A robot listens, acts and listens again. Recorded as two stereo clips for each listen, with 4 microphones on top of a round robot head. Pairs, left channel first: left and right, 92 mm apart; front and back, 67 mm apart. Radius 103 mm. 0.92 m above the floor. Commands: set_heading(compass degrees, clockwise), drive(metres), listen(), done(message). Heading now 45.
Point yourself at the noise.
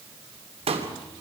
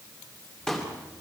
set_heading(130)
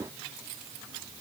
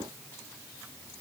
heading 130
done("I heard a pop from this way, but can't make it out now.")